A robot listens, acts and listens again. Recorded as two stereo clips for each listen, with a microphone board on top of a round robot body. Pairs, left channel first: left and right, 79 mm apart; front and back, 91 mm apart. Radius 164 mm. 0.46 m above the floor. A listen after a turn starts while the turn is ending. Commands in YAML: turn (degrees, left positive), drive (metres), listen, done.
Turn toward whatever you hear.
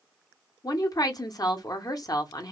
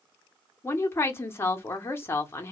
turn: 60
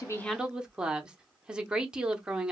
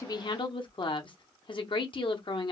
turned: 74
turn: -10
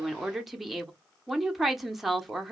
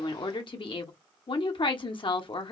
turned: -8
done: "Found it: a woman speaking, straight ahead."